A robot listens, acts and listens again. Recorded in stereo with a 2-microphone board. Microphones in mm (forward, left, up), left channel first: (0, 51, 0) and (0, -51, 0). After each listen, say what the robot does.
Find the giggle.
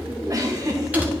Turn 35° right.
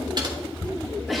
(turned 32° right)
Facing the giggle.